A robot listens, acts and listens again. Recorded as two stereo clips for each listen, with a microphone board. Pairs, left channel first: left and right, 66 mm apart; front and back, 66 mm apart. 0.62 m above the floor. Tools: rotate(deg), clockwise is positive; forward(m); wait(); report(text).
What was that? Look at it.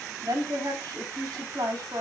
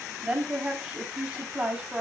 rotate(100)
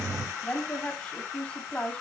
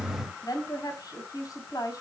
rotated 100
rotate(-20)
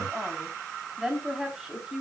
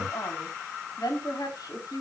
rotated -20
report("Found it: a woman speaking, straight ahead, 2 to 4 m away.")